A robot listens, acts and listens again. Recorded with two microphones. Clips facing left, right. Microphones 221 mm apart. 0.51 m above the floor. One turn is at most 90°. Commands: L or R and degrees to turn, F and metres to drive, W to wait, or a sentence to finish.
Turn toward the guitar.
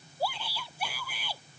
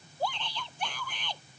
W
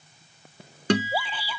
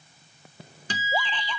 L75
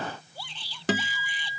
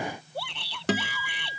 Facing the guitar.